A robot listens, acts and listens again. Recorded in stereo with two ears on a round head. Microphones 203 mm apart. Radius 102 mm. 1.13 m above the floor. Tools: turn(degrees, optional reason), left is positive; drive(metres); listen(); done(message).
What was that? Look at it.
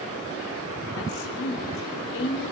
turn(degrees=65, reason="The woman speaking: about 65° left or 115° left.")
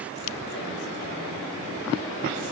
listen()
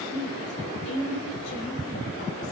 turn(degrees=55, reason="So it is at 55° left.")
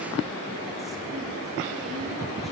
listen()
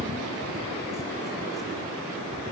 listen()
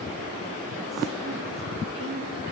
done("Found it: a woman speaking, straight ahead.")